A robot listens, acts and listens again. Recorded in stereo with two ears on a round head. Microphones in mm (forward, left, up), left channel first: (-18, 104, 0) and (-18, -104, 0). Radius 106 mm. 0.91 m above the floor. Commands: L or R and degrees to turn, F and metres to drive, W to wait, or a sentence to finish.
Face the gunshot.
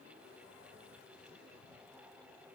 W
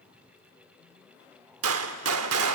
R70
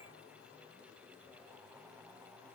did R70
W
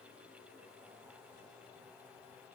I heard a gunshot, but can't make it out now. It was about straight ahead or 40° right.